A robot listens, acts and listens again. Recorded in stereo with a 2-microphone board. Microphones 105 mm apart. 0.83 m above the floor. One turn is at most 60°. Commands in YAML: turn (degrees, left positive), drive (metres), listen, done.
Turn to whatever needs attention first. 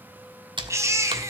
turn: -25
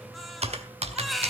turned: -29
done: "Facing the baby crying."